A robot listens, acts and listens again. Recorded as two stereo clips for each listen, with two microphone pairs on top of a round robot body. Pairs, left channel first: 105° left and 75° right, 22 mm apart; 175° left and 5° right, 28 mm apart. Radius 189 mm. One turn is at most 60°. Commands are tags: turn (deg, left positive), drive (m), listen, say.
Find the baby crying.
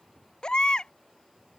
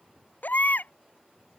<turn deg="60"/>
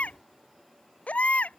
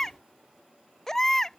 <turn deg="60"/>
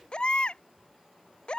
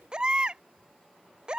<turn deg="55"/>
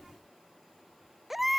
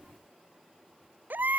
<say>Found it: a baby crying, straight ahead.</say>